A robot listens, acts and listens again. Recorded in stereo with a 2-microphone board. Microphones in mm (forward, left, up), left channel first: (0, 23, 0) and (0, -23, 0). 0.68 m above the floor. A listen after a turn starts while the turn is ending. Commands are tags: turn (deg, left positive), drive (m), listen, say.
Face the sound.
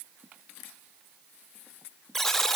<turn deg="30"/>
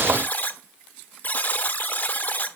<turn deg="140"/>
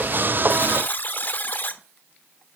<turn deg="45"/>
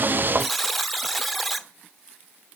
<say>Found it: a buzzer, straight ahead.</say>